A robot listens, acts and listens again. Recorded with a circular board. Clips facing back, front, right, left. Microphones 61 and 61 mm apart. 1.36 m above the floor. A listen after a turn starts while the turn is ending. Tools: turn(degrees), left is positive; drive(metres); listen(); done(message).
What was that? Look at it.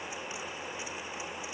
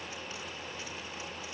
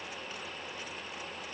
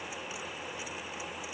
listen()
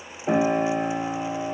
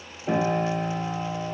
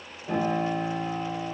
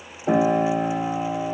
turn(degrees=110)
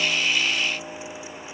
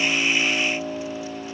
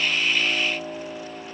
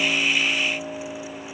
done("Found it: a piano, straight ahead, 1 to 2 m away.")